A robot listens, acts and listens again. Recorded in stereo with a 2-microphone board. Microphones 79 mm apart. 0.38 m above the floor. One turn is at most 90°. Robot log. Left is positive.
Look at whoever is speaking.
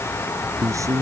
note: The man speaking: about 40° right or 140° right.
cmd yaw -40
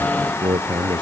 note: So it is at 100° right.
cmd yaw -90
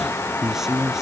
end: Found it: a man speaking, straight ahead.